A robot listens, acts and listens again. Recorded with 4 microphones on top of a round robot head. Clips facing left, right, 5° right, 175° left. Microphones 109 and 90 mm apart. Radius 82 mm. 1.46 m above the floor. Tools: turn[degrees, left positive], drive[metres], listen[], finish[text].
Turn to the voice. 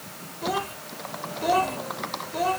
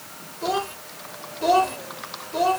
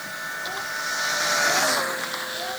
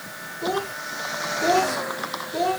Thought: The child speaking: 155° right.
Action: turn[-155]
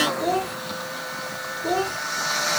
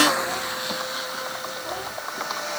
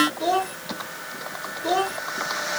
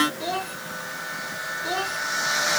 Thought: The child speaking is now 50° left.
Action: turn[50]
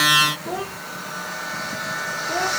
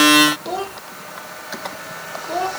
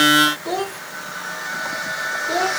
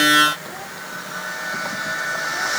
Thought: The child speaking is now 20° right.
Action: turn[-20]
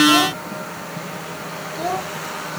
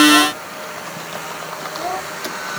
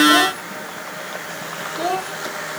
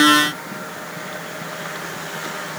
Action: finish[Facing the child speaking.]